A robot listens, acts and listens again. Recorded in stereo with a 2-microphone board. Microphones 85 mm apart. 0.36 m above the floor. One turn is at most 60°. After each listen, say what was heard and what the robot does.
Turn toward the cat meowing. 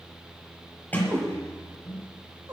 The cat meowing: about 45° right or 135° right. Turn 45° right.
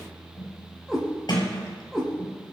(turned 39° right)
Found it: a cat meowing, straight ahead, over 4 m away.